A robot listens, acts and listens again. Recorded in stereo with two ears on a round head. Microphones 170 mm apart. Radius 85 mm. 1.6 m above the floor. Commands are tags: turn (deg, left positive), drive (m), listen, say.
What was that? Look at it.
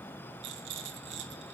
<turn deg="-65"/>
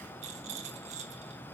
<turn deg="-40"/>
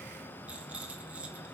<say>Found it: a rattle, straight ahead.</say>